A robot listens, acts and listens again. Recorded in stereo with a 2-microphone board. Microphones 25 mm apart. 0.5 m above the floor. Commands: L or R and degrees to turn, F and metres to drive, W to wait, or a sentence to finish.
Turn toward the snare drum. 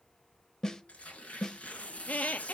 L20
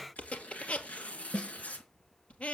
L140
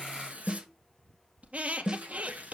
R30
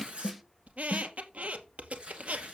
Facing the snare drum.